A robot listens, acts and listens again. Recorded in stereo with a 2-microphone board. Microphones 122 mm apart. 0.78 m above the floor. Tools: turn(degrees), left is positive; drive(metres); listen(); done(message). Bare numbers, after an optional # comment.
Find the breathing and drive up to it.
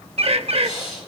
# The breathing: about 50° left or 130° left.
turn(50)
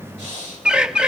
# So it is at 80° left.
turn(80)
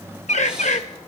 listen()
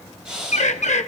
drive(1.0)
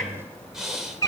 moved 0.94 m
drive(1.0)
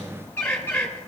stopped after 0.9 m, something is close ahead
listen()
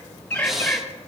done("Arrived at the breathing, straight ahead.")